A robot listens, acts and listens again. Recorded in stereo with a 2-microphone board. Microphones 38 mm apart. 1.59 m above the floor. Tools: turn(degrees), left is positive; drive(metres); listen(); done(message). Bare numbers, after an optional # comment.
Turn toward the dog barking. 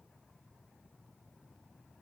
listen()
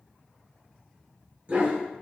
# The dog barking: about 40° right or 140° right.
turn(-40)
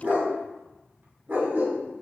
# So it is at 90° right.
turn(-90)
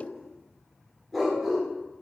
done("Found it: a dog barking, straight ahead, 1 to 2 m away.")